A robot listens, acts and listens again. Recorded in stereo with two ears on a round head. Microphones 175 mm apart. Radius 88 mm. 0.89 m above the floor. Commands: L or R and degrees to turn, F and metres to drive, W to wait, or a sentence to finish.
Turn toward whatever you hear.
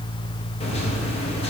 L30
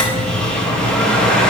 Facing the microwave.